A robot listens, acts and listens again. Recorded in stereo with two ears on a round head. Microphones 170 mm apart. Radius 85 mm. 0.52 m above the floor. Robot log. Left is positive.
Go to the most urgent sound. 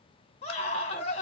note: The scream: about 35° left or 145° left.
cmd yaw +35
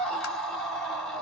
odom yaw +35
cmd fwd 1.0
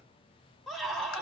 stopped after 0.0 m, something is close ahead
end: Something is in my way. I am facing the scream but have not reached it.